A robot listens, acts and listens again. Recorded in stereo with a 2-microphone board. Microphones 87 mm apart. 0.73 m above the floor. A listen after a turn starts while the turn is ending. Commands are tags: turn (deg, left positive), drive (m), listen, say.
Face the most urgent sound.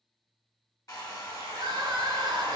<turn deg="-50"/>
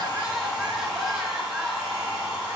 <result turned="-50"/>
<listen/>
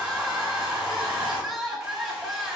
<say>Facing the crying, under 1 m away.</say>